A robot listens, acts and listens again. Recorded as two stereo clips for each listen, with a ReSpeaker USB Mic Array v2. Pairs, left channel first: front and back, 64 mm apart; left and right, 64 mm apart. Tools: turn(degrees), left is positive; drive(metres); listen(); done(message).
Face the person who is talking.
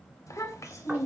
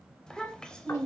turn(degrees=15)
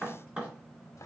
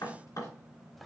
listen()
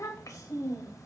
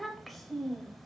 done("Found it: a child speaking, straight ahead, under 1 m away.")